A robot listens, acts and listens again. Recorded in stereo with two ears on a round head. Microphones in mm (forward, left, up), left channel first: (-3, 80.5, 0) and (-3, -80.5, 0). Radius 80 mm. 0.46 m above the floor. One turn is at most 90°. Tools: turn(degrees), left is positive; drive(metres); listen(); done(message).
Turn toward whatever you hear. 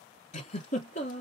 turn(degrees=45)
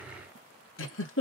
turn(degrees=90)
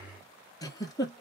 turn(degrees=20)
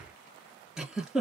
done("Facing the giggle, 1 to 2 m away.")